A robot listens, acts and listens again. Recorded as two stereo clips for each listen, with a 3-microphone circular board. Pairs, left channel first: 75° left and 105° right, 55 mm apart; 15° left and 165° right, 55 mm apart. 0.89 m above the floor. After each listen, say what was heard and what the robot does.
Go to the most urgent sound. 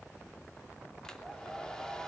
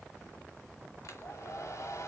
Keep listening.
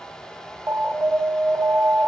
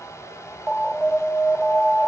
The alarm: 55° right. Turn 55° right.
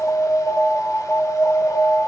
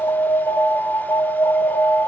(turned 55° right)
The alarm is now 20° left. Turn 20° left.
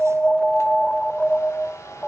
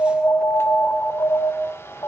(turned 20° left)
Drive 1.0 m forward.
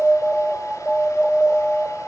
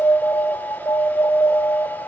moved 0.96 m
Drive 1.0 m forward.
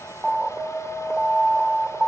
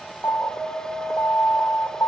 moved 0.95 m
The alarm is now 10° right. Turn 10° right.
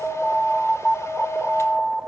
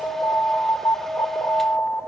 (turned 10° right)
Drive 1.0 m forward.
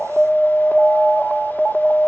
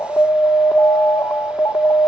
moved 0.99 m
Drive 1.0 m forward.
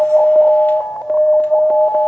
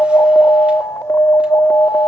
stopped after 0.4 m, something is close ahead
The alarm is now 10° right. Turn 10° right.
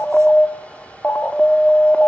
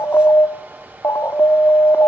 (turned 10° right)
I am next to the alarm.